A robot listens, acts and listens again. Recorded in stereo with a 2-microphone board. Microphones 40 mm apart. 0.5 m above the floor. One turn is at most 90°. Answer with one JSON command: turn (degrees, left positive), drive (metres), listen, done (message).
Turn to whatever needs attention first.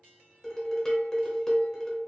{"listen": true}
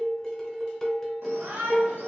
{"turn": -60}
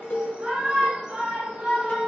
{"turn": -35}
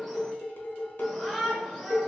{"done": "Found it: a shout, straight ahead, 1 to 2 m away."}